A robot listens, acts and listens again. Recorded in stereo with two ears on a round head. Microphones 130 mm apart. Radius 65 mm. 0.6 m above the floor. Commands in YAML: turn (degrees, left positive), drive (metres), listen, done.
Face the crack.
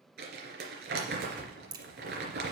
turn: -30
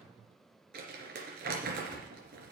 listen: true
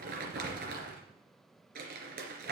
done: "I heard a crack, but can't make it out now. It was about straight ahead or 120° right."